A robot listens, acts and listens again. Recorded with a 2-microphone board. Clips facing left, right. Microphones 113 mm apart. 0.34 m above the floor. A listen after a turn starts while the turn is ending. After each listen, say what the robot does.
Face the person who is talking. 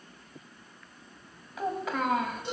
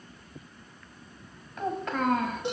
Turn 30° left.
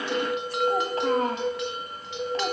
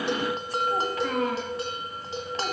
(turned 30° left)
Turn 145° left.
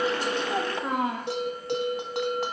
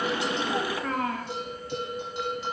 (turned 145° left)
Turn 25° left.
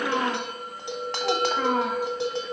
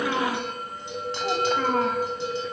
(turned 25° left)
Turn 10° left.
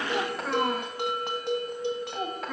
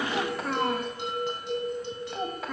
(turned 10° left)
Facing the child speaking, 1 to 2 m away.